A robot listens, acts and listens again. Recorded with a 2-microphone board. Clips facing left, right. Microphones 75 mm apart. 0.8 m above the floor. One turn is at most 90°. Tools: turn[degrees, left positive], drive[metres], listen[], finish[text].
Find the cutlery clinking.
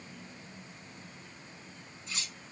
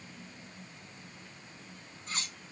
Thought: The cutlery clinking: about 50° right or 130° right.
Action: turn[-50]
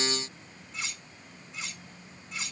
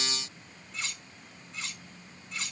Action: finish[Found it: cutlery clinking, straight ahead, over 4 m away.]